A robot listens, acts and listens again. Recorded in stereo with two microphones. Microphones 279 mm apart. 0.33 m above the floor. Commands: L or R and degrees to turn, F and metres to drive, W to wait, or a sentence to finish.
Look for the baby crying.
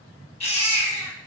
L25
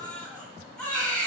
Found it: a baby crying, straight ahead, 1 to 2 m away.